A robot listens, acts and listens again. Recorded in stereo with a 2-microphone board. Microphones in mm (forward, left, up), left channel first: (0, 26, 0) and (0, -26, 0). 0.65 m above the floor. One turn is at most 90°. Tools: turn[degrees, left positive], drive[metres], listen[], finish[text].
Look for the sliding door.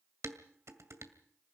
Action: listen[]
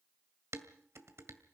Action: listen[]
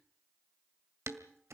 Action: finish[I can't make out a sliding door, only dishes clattering.]